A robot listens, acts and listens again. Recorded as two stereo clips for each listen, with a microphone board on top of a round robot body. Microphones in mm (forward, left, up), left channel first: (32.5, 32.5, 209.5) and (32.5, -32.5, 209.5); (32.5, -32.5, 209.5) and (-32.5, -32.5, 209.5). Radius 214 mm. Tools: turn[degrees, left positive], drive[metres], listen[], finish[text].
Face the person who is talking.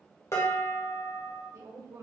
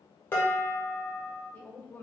Thought: The woman speaking: 60° right.
Action: turn[-60]
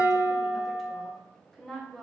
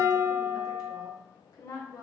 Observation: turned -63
Action: finish[Found it: a woman speaking, straight ahead.]